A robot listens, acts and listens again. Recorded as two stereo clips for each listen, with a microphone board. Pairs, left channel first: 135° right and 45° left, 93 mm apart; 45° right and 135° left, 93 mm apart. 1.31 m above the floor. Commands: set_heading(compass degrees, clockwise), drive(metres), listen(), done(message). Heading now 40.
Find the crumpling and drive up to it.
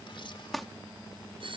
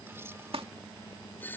set_heading(265)
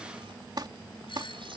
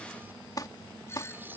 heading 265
drive(1.0)
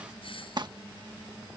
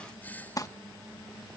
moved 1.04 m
drive(1.0)
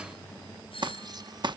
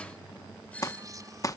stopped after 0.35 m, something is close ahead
set_heading(255)
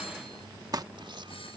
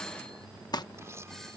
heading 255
done("Arrived at the crumpling, straight ahead.")